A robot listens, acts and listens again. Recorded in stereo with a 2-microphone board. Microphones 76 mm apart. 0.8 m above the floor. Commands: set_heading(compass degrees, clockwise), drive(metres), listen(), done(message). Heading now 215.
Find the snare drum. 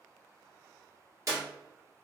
listen()
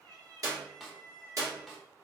set_heading(245)
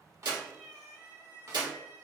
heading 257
set_heading(32)
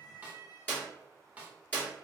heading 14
set_heading(34)
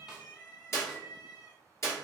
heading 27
listen()
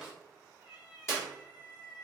listen()
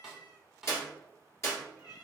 done("Found it: a snare drum, straight ahead, under 1 m away.")